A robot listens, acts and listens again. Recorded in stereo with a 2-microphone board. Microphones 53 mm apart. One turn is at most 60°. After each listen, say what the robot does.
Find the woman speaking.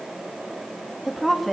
Turn 30° left.
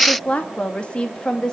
Turn 60° left.
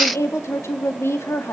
Turn 60° left.
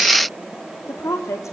Turn 60° left.
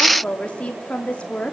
Turn 20° left.
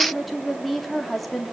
Found it: a woman speaking, straight ahead, 2 to 4 m away.